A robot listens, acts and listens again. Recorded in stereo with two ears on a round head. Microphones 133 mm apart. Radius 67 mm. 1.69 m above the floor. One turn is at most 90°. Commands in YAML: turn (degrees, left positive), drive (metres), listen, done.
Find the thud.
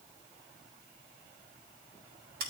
listen: true
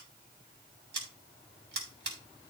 listen: true
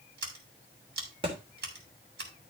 turn: -35
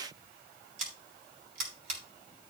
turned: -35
listen: true
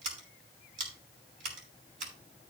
done: "I heard a thud, but can't make it out now. It was about straight ahead or 110° right."